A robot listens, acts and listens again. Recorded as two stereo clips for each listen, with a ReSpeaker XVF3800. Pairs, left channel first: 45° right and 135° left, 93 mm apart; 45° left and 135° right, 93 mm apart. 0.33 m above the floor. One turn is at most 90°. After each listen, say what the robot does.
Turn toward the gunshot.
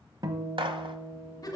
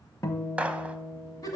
Turn 90° left.
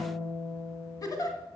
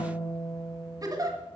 Turn 60° left.
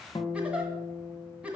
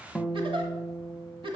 I heard a gunshot from this way, but can't make it out now.